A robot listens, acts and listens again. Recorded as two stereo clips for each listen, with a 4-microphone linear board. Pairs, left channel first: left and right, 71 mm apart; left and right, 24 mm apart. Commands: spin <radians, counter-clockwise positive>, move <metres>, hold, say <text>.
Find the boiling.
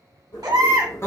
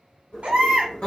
spin 0.96
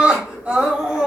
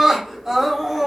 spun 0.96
spin 0.96
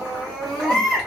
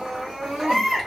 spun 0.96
hold
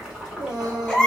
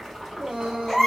spin -0.17
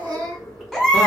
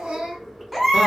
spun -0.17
say Facing the boiling, 1 to 2 m away.